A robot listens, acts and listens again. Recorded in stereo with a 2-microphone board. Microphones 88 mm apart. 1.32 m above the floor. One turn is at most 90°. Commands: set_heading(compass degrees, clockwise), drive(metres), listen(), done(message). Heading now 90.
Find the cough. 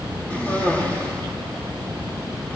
set_heading(70)
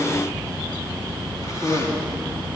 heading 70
set_heading(340)
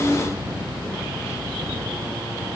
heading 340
set_heading(290)
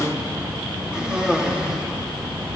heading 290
set_heading(300)
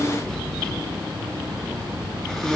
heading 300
done("Found it: a cough, straight ahead.")